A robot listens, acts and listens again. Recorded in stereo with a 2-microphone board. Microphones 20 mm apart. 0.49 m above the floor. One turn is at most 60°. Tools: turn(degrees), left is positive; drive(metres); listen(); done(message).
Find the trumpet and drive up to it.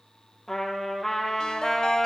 turn(degrees=30)
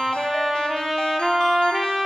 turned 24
turn(degrees=-15)
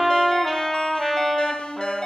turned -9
drive(metres=1.0)
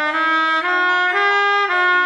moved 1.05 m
turn(degrees=-10)
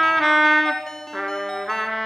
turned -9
drive(metres=1.0)
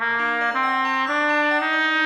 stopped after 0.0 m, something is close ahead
done("I am next to the trumpet.")